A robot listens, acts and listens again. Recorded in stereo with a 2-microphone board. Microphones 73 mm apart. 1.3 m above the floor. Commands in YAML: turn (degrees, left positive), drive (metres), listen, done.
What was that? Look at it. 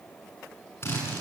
turn: 35
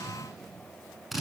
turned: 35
done: "Facing the drill."